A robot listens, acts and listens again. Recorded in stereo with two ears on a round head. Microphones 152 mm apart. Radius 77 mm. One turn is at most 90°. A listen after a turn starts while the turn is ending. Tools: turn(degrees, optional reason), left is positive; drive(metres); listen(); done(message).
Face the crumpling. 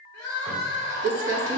turn(degrees=-75, reason="The crumpling: about 75° right or 105° right.")
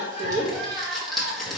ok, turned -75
done("Facing the crumpling, 1 to 2 m away.")